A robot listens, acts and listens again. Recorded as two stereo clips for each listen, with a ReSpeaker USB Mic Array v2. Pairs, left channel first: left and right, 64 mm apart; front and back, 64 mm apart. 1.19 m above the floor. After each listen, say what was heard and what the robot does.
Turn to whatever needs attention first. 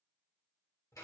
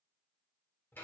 Keep listening.
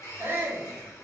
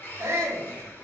The shout: 140° right. Turn 140° right.
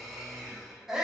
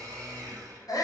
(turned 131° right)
Found it: a shout, straight ahead, under 1 m away.